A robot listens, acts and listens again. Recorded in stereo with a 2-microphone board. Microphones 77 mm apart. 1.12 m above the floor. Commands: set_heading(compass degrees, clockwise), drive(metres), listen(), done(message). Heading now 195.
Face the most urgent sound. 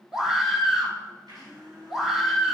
set_heading(225)
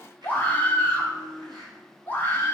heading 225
set_heading(200)
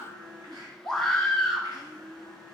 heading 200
done("Facing the scream.")